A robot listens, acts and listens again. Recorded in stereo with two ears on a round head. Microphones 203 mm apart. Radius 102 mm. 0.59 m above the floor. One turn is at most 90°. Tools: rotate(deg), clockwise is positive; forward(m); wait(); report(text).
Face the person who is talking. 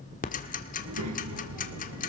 rotate(90)
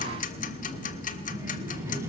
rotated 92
rotate(10)
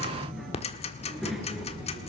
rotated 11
report("Found it: a child speaking, straight ahead.")